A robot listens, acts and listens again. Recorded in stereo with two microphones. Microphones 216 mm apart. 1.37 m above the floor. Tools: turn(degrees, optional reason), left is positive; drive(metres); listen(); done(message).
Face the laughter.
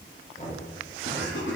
turn(degrees=60, reason="The laughter: about 60° left or 120° left.")
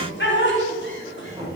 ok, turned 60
turn(degrees=60, reason="So it is at 60° left.")
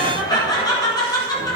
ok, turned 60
turn(degrees=15, reason="The laughter is now 15° left.")
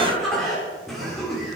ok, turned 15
done("Found it: laughter, straight ahead.")